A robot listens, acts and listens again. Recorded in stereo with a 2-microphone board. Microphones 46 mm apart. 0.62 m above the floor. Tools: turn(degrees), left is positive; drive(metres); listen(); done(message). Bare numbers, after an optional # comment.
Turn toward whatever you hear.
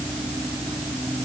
listen()
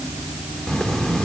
# The writing: about 15° left or 165° left.
turn(15)
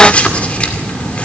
# So it is at 150° left.
turn(150)
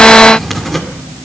done("Facing the writing.")